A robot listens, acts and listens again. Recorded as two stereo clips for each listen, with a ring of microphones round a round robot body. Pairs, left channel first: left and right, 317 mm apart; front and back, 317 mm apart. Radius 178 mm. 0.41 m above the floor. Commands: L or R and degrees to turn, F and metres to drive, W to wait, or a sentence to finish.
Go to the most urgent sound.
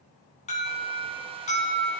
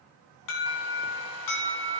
L20
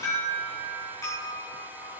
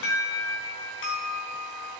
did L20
L10
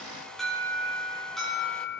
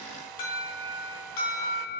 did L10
F1.0
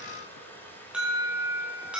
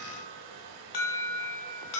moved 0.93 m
F1.0
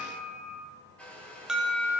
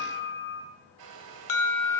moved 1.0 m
F1.0
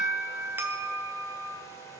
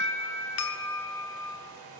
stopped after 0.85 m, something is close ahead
R10
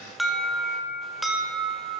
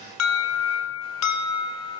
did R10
I am next to the alarm.